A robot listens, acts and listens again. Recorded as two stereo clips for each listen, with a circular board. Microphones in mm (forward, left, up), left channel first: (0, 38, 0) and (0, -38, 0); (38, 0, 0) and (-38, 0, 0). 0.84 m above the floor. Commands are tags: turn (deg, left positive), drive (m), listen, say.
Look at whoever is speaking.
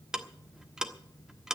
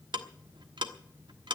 <listen/>
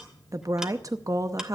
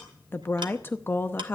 <turn deg="-55"/>
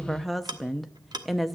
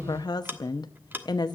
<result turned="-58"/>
<say>Found it: a woman speaking, straight ahead, under 1 m away.</say>